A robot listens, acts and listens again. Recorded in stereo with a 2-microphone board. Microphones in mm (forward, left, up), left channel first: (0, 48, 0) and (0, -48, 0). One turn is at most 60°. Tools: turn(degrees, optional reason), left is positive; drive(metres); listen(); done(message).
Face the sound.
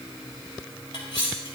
turn(degrees=60)
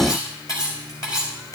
turn(degrees=40, reason="So it is at 40° left.")
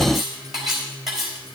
done("Facing the cutlery clinking, 2 to 4 m away.")